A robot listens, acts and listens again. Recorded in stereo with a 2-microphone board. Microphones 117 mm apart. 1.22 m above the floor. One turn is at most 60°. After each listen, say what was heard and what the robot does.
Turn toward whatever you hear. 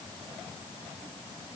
Keep listening.
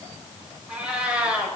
Turn 30° right.
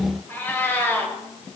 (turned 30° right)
So it is at 20° left. Turn 20° left.
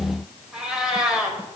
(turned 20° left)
Facing the cat meowing, 2 to 4 m away.